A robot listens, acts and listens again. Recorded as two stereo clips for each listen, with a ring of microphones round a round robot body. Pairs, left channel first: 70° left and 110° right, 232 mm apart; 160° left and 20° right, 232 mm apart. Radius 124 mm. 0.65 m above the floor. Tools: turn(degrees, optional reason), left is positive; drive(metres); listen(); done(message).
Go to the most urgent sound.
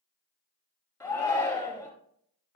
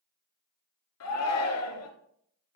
turn(degrees=150, reason="The shout: 150° left.")
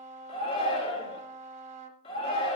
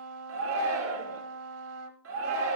drive(metres=1.0)
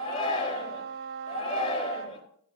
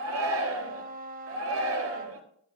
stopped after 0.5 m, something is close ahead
done("Something is in my way. I am facing the shout but have not reached it.")